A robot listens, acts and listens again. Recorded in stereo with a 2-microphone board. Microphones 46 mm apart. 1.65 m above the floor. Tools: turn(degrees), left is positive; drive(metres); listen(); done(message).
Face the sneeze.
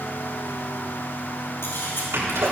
turn(degrees=-90)
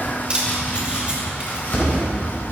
done("I heard a sneeze from this way, but can't make it out now.")